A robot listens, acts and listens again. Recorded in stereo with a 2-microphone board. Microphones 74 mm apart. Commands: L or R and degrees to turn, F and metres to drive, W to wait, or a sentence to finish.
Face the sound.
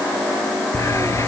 L45
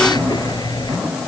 L90
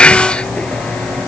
L15
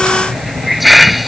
Facing the hiss.